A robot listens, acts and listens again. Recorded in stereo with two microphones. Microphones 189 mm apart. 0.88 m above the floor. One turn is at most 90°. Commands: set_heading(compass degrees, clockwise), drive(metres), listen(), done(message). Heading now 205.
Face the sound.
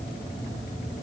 listen()
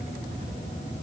listen()
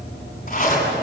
set_heading(160)
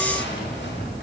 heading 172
set_heading(82)
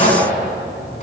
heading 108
set_heading(68)
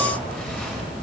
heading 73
done("Facing the zipper, over 4 m away.")